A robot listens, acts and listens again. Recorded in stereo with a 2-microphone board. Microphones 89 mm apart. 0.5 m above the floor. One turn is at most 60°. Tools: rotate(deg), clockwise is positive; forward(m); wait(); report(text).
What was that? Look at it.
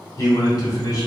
rotate(-45)
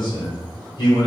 rotate(-60)
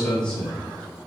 rotate(-15)
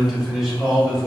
report("Found it: a man speaking, straight ahead, 1 to 2 m away.")